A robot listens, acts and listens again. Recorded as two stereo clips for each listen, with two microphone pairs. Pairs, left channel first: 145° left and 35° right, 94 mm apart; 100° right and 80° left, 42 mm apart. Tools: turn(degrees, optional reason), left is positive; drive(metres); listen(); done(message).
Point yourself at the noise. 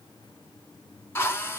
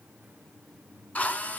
turn(degrees=-150, reason="The drill: 150° right.")
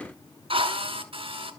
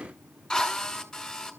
turn(degrees=-25, reason="The drill is now 25° right.")
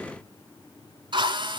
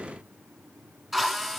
done("Facing the drill.")